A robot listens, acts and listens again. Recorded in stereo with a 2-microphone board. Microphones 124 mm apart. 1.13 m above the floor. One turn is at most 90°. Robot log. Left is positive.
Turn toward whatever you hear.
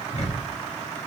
note: The ticking: about 60° left or 120° left.
cmd yaw +60
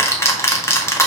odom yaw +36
note: So it is at 25° left.
cmd yaw +25
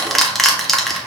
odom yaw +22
end: Facing the ticking.